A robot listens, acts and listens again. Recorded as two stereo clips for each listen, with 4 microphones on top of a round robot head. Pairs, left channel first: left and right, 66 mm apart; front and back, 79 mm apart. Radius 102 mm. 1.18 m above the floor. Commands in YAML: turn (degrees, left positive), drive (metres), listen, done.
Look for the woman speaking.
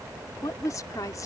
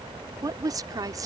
turn: 135
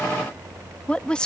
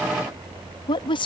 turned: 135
turn: 10
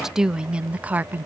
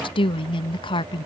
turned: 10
turn: -30
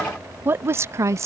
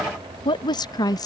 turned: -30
turn: -45
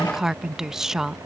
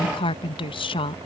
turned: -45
done: "Found it: a woman speaking, straight ahead."